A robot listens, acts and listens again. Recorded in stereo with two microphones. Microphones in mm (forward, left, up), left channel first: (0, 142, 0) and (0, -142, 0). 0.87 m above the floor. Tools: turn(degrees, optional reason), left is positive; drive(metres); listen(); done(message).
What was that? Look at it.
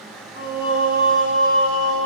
turn(degrees=45, reason="The singing: about 45° left or 135° left.")
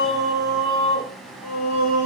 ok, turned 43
turn(degrees=105, reason="So it is at 105° left.")
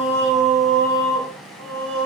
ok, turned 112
turn(degrees=-25, reason="The singing is now 25° right.")
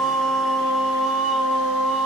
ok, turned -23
done("Facing the singing.")